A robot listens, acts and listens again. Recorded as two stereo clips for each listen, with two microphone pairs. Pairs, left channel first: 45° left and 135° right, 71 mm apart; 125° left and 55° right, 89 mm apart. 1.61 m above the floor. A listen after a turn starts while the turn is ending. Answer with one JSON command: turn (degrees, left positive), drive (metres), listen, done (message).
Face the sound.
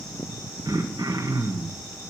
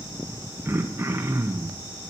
{"turn": -120}
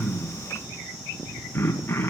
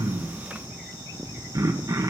{"turn": -10}
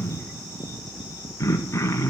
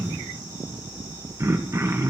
{"done": "Facing the throat clearing."}